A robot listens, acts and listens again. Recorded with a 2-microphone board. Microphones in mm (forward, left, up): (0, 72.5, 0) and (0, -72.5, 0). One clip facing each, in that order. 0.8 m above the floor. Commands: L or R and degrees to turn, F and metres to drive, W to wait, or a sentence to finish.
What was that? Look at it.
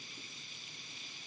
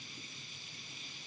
W
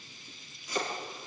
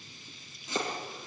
R25
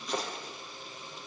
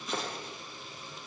Found it: chopping, straight ahead.